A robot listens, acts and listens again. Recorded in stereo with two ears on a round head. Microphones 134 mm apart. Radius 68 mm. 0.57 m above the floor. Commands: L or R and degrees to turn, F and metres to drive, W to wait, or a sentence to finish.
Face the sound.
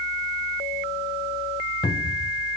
L30
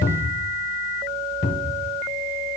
L120
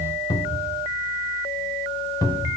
L25
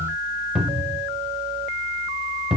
Facing the cupboard door.